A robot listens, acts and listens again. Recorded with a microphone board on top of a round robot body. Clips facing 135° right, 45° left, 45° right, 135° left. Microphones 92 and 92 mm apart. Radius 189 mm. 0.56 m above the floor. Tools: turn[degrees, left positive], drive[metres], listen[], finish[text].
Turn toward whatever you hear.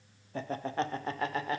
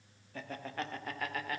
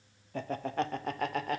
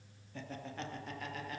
Thought: The laughter: 70° right.
Action: turn[-70]
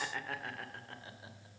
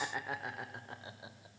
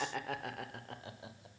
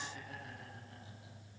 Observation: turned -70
Thought: The laughter is now 25° right.
Action: turn[-25]
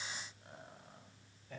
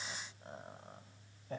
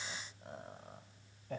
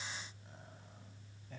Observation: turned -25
Thought: The laughter is now 10° right.
Action: turn[-10]
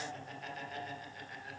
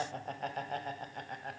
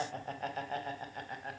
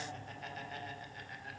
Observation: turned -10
Action: finish[Facing the laughter.]